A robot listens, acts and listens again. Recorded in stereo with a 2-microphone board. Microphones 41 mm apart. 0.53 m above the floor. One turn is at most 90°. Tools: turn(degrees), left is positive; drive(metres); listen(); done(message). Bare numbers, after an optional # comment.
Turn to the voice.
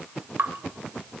listen()
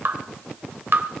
listen()
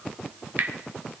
done("I can't make out anyone speaking to turn to.")